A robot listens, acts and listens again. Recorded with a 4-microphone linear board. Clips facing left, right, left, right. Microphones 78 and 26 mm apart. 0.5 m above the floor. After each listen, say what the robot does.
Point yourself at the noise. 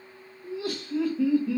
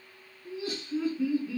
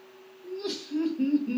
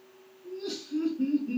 Turn 65° left.
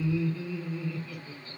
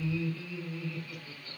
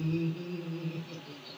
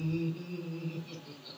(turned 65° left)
Found it: laughter, straight ahead.